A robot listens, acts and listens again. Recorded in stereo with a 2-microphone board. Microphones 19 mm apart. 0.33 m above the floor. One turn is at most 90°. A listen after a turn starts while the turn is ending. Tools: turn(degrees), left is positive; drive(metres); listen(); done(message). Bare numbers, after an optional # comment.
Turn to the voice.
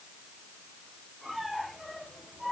listen()
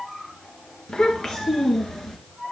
# The child speaking: about 30° left or 150° left.
turn(30)
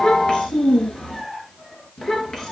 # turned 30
# The child speaking: about 35° left or 145° left.
turn(35)
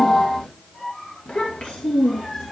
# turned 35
# So it is at 115° left.
turn(90)
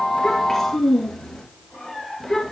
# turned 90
# The child speaking is now 20° left.
turn(20)
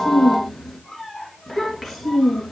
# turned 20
done("Found it: a child speaking, straight ahead, 2 to 4 m away.")